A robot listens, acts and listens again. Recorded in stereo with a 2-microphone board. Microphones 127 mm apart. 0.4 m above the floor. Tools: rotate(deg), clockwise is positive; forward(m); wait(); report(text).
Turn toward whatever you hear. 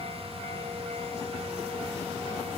wait()
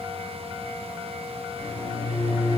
rotate(55)
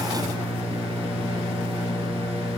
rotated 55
rotate(45)
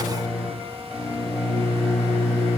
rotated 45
report("Facing the microwave, 1 to 2 m away.")